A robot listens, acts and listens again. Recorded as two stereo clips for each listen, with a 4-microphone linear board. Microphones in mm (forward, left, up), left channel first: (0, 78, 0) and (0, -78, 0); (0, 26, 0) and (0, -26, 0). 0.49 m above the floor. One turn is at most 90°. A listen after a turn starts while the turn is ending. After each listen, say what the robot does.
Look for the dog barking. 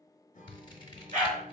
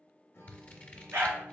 Turn 50° right.
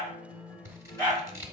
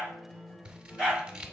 Turn 15° left.
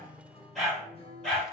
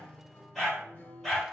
Found it: a dog barking, straight ahead, 2 to 4 m away.